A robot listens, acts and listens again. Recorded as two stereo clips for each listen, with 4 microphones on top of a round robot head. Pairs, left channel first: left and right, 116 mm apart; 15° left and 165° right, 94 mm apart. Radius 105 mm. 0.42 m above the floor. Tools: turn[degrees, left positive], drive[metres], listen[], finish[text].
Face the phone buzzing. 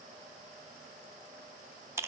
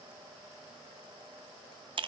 Action: listen[]
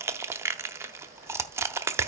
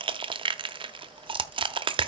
Action: listen[]
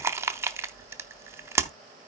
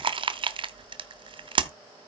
Action: finish[I can't make out a phone buzzing to turn to.]